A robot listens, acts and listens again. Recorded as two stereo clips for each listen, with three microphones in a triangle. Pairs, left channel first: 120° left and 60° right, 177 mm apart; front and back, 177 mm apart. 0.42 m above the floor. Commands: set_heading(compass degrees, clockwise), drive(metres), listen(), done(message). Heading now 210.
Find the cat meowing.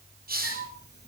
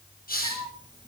set_heading(95)
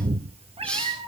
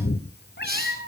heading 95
done("Found it: a cat meowing, straight ahead.")